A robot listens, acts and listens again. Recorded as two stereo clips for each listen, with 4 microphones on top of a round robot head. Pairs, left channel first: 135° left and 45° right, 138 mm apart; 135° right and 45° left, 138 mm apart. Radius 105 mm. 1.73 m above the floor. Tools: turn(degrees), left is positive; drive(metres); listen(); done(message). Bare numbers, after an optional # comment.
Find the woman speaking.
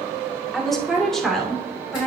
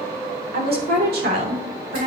# The woman speaking: 50° left.
turn(50)
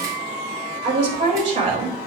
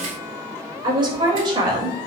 # The woman speaking is now 10° right.
turn(-10)
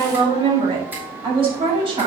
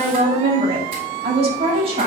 done("Found it: a woman speaking, straight ahead.")